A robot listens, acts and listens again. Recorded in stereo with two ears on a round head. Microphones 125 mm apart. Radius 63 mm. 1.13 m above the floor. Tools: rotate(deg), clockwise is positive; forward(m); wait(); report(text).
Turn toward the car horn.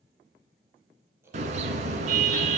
rotate(55)
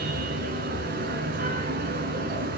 rotate(70)
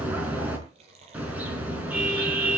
rotate(10)
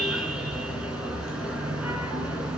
report("Found it: a car horn, straight ahead.")